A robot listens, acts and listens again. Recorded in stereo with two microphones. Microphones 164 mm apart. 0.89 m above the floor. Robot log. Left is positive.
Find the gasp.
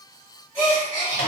cmd yaw +30
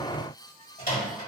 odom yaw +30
cmd idle
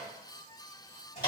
end: I heard a gasp, but can't make it out now. It was about 15° right or 135° left.